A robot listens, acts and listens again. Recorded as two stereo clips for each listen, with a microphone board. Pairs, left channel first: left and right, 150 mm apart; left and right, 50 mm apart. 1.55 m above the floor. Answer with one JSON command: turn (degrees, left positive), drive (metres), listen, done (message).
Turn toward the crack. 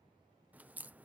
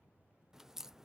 {"turn": -30}
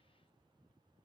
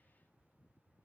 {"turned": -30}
{"listen": true}
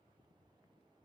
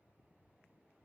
{"done": "I heard a crack, but can't make it out now. It was about 20° left or 140° right."}